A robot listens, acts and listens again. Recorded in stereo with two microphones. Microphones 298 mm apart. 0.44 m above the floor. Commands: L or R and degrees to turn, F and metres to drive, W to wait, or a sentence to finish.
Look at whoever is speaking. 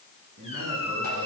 R90
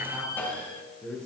Found it: a man speaking, straight ahead, over 4 m away.